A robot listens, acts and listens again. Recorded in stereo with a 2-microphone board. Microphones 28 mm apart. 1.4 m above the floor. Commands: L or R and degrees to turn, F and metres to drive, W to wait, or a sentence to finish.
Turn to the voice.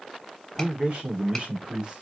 R35
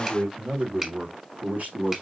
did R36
R120
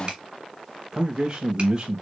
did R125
R25
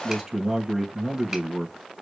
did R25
Facing the man speaking.